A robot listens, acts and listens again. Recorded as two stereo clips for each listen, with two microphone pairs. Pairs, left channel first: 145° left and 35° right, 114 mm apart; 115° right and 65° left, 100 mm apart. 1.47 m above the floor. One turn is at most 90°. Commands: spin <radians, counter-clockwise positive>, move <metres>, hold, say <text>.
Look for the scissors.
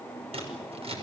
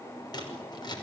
spin -1.22
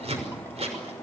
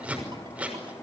spin -0.17
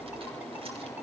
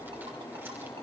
hold
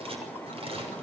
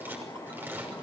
say Facing the scissors.